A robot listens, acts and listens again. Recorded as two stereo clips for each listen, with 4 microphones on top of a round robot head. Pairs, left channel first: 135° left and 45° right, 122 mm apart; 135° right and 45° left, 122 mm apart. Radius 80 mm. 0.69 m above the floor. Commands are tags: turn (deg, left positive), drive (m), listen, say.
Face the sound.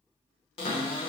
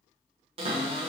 <turn deg="90"/>
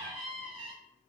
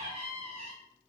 <say>Facing the cupboard door, under 1 m away.</say>